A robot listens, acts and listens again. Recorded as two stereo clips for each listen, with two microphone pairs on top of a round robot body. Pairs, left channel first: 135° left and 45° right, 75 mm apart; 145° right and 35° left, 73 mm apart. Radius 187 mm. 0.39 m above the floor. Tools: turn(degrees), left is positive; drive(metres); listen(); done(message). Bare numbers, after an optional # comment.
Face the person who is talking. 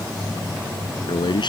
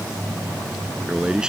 # The man speaking: 115° left.
turn(115)
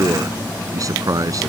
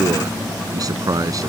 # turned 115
done("Found it: a man speaking, straight ahead.")